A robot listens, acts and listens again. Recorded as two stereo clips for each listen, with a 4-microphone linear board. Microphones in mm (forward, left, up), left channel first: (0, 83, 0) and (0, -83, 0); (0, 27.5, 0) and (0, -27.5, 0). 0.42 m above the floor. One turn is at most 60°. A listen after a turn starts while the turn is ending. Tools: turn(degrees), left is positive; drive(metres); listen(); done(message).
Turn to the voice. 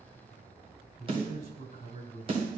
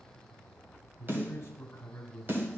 turn(degrees=50)
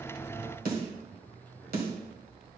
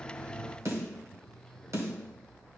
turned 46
listen()
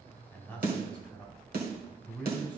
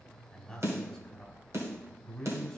turn(degrees=10)
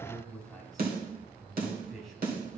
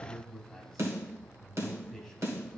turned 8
done("Facing the man speaking, 2 to 4 m away.")